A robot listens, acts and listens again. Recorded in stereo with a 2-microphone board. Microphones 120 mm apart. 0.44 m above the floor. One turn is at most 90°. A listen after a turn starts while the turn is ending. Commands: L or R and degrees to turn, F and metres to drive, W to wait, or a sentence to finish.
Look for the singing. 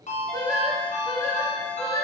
L25
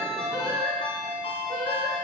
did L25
L40
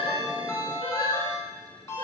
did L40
L90
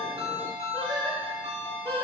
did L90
L15
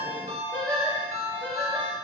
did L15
Facing the singing, over 4 m away.